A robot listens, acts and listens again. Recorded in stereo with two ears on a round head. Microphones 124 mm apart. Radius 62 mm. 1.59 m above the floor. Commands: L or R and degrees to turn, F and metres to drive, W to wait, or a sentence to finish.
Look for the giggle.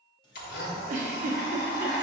R55
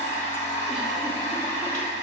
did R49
W
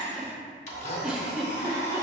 Found it: a giggle, straight ahead.